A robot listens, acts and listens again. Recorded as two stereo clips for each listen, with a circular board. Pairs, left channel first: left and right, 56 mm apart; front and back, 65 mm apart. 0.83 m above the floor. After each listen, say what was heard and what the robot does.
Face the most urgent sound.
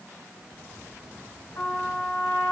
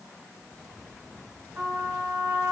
Keep listening.
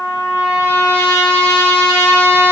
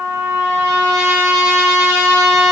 Keep listening.
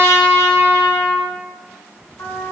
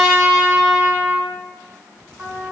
I can't make out anything urgent, only a trumpet.